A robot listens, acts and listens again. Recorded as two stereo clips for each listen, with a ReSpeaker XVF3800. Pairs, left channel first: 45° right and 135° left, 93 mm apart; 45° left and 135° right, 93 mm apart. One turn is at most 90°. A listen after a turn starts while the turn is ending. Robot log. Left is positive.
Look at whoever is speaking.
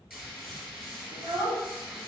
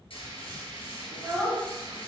note: The child speaking: 145° left.
cmd yaw +90
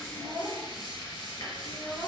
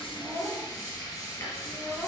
note: The child speaking is now 65° left.
cmd yaw +65
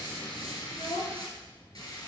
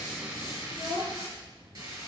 note: The child speaking is now 20° right.
cmd yaw -20
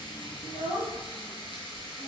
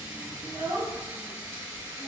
end: Found it: a child speaking, straight ahead.